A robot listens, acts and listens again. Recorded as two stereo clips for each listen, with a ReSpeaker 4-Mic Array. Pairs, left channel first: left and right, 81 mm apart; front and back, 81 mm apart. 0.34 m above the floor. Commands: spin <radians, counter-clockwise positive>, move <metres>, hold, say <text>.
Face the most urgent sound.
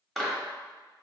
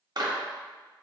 hold
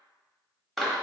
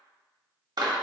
hold
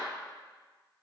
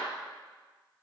say I can't make out anything urgent to turn to.